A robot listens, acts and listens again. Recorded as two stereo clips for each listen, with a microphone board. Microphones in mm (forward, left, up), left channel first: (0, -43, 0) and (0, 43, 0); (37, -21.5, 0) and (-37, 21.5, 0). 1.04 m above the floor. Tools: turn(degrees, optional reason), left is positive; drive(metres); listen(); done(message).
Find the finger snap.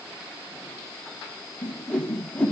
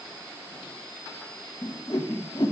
listen()
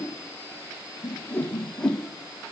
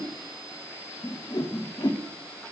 listen()
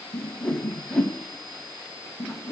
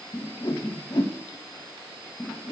done("I can't make out a finger snap to turn to.")